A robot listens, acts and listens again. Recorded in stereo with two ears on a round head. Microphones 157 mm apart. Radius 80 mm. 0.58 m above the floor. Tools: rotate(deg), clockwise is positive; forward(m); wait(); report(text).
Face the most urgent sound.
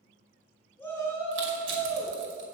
rotate(-30)
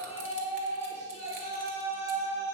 rotate(-135)
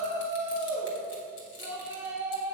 rotate(15)
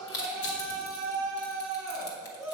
report("Found it: a shout, straight ahead.")